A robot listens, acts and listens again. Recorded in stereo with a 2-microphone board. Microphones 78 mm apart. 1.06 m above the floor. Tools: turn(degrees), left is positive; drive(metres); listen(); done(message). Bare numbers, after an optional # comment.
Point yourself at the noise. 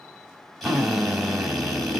turn(30)
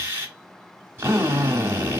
# So it is at 30° right.
turn(-30)
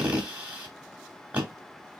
# The drill is now 15° right.
turn(-15)
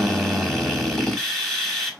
done("Found it: a drill, straight ahead, 1 to 2 m away.")